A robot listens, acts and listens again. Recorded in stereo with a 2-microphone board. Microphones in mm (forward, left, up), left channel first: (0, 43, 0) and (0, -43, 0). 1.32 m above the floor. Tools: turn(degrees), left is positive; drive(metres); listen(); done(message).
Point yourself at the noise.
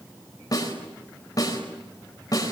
turn(degrees=45)
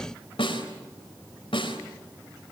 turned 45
turn(degrees=90)
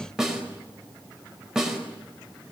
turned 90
turn(degrees=-10)
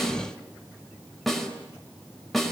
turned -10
done("Facing the snare drum, over 4 m away.")